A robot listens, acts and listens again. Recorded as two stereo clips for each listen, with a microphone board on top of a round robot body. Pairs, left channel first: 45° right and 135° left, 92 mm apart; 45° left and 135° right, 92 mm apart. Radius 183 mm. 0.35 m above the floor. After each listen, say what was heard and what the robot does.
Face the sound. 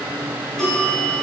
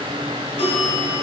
The bell: 40° left. Turn 40° left.
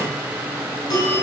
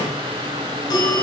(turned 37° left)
Found it: a bell, straight ahead.